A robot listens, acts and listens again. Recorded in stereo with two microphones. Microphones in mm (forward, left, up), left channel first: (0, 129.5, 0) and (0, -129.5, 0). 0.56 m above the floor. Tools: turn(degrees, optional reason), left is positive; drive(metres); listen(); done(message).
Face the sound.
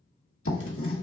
turn(degrees=60, reason="The writing: about 60° left or 120° left.")
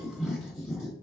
done("Found it: writing, straight ahead.")